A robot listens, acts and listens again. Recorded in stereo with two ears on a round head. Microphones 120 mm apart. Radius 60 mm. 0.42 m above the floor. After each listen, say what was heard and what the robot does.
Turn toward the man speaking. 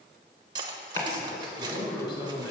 The man speaking: about 35° left or 145° left. Turn 35° left.
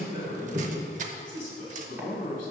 So it is at 110° left. Turn 110° left.
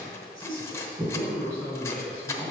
The man speaking is now 25° right. Turn 25° right.
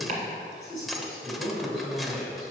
Found it: a man speaking, straight ahead, over 4 m away.